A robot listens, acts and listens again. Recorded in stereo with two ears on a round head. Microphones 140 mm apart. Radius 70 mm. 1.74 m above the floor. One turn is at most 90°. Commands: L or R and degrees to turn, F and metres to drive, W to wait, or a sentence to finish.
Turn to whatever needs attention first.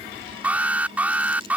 R30
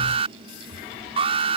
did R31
R90
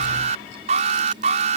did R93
R45
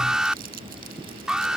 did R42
Found it: an alarm, straight ahead.